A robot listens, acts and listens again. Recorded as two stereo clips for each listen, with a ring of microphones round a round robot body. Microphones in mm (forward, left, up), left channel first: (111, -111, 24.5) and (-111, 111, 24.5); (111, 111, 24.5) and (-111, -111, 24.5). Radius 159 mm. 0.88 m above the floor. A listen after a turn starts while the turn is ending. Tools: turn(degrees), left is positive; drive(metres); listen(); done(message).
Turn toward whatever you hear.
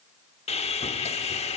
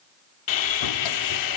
turn(degrees=25)
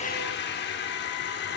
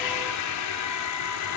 turn(degrees=10)
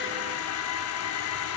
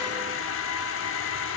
done("Facing the sawing, under 1 m away.")